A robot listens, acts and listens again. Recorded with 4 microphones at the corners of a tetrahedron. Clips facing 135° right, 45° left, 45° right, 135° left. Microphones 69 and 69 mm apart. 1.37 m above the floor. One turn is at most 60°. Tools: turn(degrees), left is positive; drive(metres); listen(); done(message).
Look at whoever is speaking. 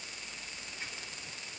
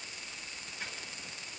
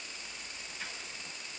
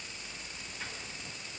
listen()
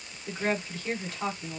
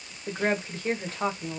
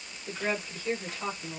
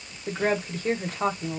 turn(degrees=60)
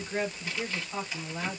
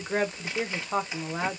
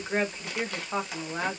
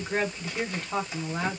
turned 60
turn(degrees=35)
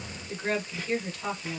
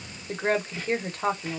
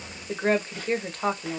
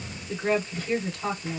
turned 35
done("Facing the woman speaking, 1 to 2 m away.")